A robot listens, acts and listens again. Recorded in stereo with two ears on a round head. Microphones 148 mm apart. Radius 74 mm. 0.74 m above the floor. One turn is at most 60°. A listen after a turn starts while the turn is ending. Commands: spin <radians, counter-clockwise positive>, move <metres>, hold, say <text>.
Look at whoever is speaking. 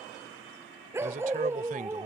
spin -0.96
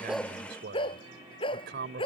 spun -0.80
spin -1.05
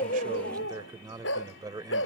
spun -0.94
spin -0.44
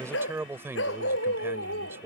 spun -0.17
spin -0.26
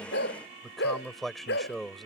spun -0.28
say Facing the man speaking.